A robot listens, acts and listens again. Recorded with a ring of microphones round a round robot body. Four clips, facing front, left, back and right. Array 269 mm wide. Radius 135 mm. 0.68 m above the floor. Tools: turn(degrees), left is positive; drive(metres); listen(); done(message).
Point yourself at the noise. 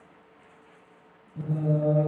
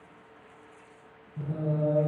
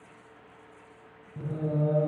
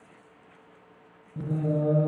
turn(degrees=-95)
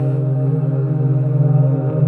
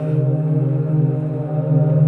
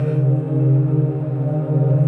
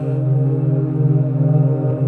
turn(degrees=-15)
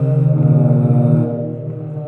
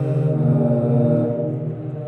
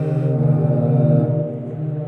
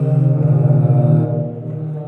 turn(degrees=-35)
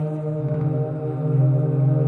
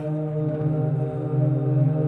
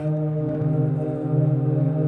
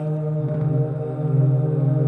turn(degrees=-35)
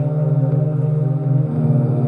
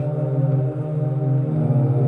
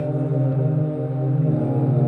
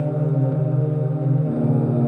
done("Found it: singing, straight ahead, 2 to 4 m away.")